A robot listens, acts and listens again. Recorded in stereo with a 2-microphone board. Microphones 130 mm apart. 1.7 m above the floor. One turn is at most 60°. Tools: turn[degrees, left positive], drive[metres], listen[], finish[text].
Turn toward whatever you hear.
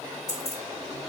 Thought: The keys jangling: about 30° right or 150° right.
Action: turn[-30]
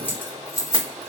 Thought: So it is at 25° left.
Action: turn[25]
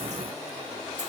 Action: listen[]
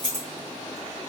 Thought: The keys jangling is now 35° left.
Action: turn[35]
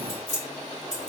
Thought: The keys jangling is now 30° left.
Action: turn[30]
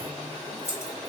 Thought: The keys jangling is now 15° left.
Action: turn[15]
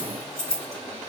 Action: finish[Found it: keys jangling, straight ahead, 2 to 4 m away.]